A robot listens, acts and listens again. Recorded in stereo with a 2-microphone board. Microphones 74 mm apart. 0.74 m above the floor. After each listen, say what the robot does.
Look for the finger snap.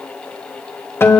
Keep listening.
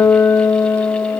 Keep listening.
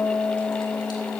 I can't make out a finger snap to turn to.